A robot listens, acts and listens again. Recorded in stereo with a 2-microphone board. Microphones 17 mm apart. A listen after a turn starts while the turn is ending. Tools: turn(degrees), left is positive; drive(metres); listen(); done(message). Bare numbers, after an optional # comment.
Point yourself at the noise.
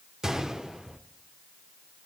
# The gunshot: about 35° right or 145° right.
turn(-35)
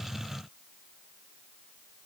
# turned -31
listen()
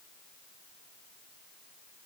done("I heard a gunshot, but can't make it out now. It was about 5° right or 110° right.")